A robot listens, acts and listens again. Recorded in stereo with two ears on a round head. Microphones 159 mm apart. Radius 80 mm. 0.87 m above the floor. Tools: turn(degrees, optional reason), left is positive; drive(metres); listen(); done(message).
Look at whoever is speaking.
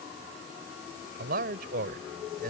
turn(degrees=-50, reason="The man speaking: about 50° right or 130° right.")
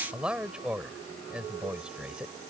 done("Facing the man speaking.")